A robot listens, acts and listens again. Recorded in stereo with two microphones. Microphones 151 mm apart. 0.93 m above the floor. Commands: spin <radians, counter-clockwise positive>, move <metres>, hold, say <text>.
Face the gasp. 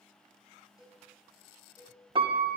hold
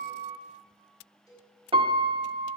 hold
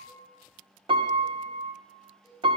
say I can't make out a gasp to turn to.